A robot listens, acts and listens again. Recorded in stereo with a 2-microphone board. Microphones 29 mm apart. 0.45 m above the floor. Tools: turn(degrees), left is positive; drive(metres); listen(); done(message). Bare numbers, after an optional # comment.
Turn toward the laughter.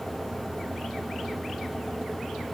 listen()
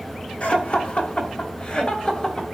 # The laughter: about 35° left or 145° left.
turn(35)
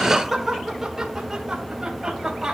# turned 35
# So it is at 20° right.
turn(-20)
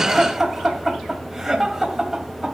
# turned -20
done("Facing the laughter, 2 to 4 m away.")